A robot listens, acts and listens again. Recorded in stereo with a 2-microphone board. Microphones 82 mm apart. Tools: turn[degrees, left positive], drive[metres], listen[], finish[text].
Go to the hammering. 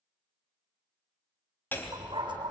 Thought: The hammering: about 25° left or 155° left.
Action: turn[25]
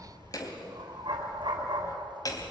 Thought: So it is at 130° left.
Action: turn[130]
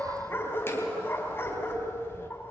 Thought: The hammering is now 30° left.
Action: turn[30]
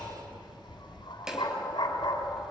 Thought: The hammering is now 10° right.
Action: turn[-10]
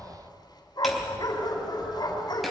Action: drive[1.0]
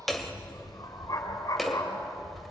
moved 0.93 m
Action: drive[1.0]
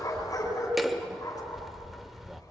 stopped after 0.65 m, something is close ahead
Action: finish[I am next to the hammering.]